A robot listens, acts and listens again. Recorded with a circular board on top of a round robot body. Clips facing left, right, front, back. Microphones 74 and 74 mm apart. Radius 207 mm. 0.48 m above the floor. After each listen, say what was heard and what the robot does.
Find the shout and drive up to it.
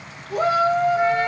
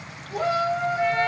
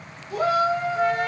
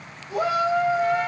The shout: 115° left. Turn 115° left.
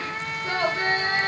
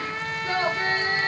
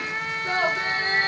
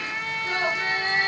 The shout is now 35° left. Turn 35° left.
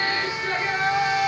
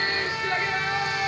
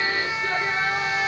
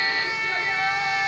The shout is now 20° left. Turn 20° left.
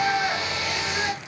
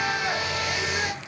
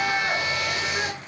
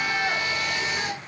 Drive 1.0 m forward.
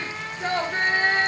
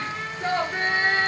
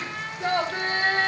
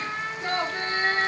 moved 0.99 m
Drive 1.0 m forward.
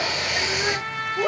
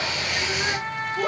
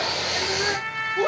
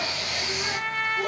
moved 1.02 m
Drive 1.0 m forward.
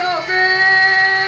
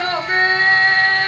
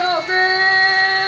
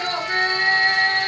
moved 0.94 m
The shout is now 15° left. Turn 15° left.
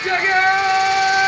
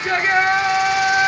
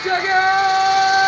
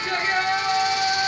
Drive 1.0 m forward.
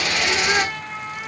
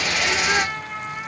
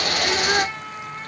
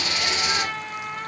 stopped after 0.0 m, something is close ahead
Arrived at the shout, straight ahead.